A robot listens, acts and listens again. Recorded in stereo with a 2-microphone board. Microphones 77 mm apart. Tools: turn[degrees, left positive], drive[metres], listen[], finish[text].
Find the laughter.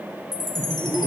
Thought: The laughter: about 30° left or 150° left.
Action: turn[30]
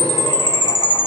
Action: listen[]
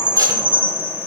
Action: listen[]
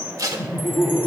Thought: So it is at 90° left.
Action: turn[90]
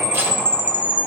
Action: listen[]
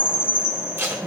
Action: listen[]
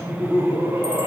Thought: The laughter is now 55° right.
Action: turn[-55]
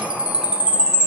Action: listen[]
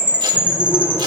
Action: listen[]
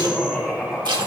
Action: finish[Facing the laughter.]